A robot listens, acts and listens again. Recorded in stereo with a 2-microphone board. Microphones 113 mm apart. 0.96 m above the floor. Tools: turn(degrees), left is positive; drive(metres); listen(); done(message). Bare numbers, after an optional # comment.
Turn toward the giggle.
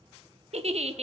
# The giggle: about 65° right or 115° right.
turn(-65)
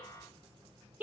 # So it is at 15° right.
turn(-15)
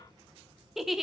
done("Found it: a giggle, straight ahead.")